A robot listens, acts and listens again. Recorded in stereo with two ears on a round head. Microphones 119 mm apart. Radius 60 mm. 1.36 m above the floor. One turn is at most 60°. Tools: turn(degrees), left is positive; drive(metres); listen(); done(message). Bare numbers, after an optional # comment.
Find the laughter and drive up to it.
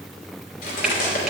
listen()
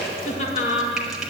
# The laughter: about 55° left or 125° left.
turn(55)
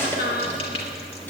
# So it is at 70° left.
turn(60)
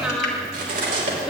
drive(1.0)
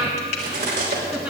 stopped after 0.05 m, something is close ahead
# The laughter is now 10° right.
turn(-10)
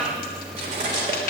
listen()
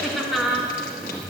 done("Something is in my way. I am facing the laughter but have not reached it.")